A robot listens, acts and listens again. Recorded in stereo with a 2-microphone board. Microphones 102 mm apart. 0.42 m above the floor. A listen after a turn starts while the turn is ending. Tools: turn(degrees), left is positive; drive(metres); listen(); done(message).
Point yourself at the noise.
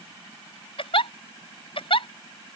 turn(degrees=60)
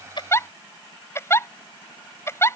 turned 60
turn(degrees=30)
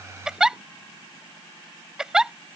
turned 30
done("Facing the giggle.")